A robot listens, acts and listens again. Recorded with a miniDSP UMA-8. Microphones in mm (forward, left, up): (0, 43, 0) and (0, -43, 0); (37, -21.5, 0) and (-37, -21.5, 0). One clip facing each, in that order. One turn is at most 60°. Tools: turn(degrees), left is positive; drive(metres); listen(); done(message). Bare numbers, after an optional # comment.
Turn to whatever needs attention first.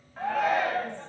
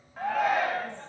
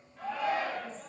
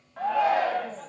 # The shout: straight behind.
turn(60)
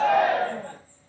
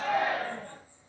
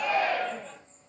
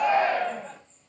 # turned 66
# The shout is now 115° left.
turn(60)
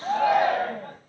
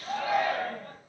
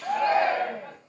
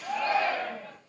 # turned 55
# The shout is now 60° left.
turn(60)
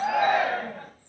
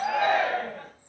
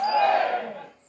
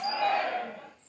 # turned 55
done("Facing the shout, 1 to 2 m away.")